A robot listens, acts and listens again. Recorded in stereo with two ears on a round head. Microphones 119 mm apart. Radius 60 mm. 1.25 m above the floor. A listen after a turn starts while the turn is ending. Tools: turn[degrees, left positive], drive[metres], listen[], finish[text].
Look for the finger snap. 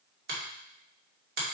Action: turn[-90]
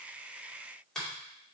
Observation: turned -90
Action: finish[Found it: a finger snap, straight ahead.]